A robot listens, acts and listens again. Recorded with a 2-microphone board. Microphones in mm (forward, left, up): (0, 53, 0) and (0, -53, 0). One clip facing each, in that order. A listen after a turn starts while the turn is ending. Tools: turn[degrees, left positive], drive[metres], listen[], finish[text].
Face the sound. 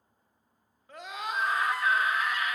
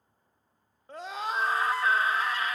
Thought: The scream: about 30° right or 150° right.
Action: turn[-30]
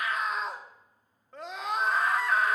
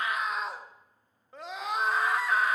Action: finish[Found it: a scream, straight ahead, under 1 m away.]